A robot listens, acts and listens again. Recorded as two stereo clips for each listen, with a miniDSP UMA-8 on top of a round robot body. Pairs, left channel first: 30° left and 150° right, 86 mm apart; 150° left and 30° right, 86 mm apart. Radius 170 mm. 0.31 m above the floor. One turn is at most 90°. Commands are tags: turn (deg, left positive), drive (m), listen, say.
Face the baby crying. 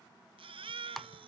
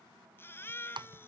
<turn deg="-90"/>
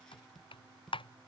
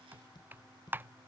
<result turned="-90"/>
<turn deg="-55"/>
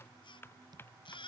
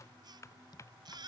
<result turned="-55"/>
<turn deg="10"/>
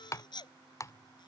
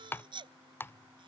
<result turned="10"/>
<say>Facing the baby crying.</say>